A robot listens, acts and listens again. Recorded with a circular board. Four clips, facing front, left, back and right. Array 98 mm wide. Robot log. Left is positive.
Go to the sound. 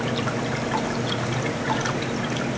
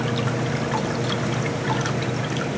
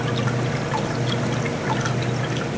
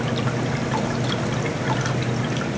cmd idle
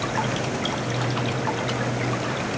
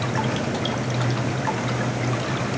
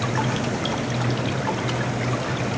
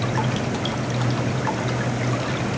cmd idle
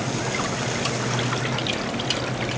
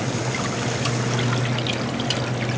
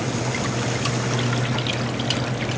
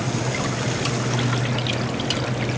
end: I can't make out anything.